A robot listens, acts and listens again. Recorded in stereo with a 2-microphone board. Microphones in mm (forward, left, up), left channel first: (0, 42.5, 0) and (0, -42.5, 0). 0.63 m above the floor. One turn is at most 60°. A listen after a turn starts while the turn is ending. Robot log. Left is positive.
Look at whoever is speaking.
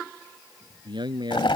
note: The man speaking: about 65° right or 115° right.
cmd yaw -60
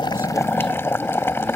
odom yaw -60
cmd idle
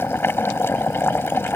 cmd idle
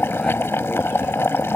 end: I heard a man speaking, but can't make it out now. It was about 5° right or 55° right.